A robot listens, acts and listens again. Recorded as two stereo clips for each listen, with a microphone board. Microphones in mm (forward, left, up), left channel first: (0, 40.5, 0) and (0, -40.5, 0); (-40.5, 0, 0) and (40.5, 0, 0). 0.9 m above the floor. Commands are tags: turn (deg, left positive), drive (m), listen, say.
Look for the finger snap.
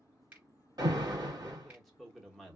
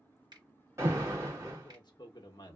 <turn deg="-20"/>
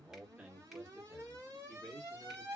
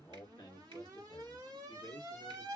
<listen/>
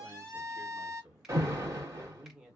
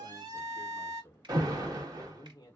<listen/>
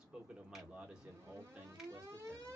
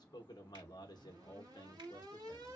<say>Facing where the finger snap came from. I can't hear it now.</say>